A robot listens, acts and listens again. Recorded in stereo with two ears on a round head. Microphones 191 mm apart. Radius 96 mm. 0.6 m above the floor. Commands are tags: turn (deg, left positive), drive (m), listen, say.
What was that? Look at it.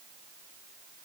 <listen/>
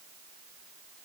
<listen/>
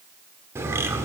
<turn deg="-30"/>
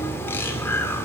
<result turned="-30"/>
<turn deg="15"/>
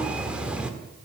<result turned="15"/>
<say>Facing the bird.</say>